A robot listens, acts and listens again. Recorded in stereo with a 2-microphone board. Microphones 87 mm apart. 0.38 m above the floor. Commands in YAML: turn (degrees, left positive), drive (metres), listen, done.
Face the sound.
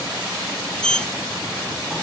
turn: 30
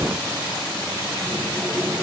listen: true
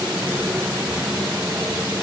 turn: -20
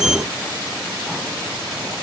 done: "Facing the sliding door."